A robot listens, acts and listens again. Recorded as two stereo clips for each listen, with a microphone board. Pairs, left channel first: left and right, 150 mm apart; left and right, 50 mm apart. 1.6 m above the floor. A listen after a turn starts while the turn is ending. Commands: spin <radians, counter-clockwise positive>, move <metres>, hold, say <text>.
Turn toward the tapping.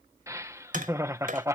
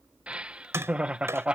spin -1.13
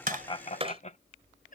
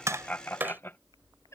spin -0.79
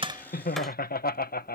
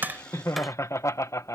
hold
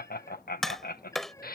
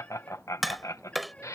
say Facing the tapping.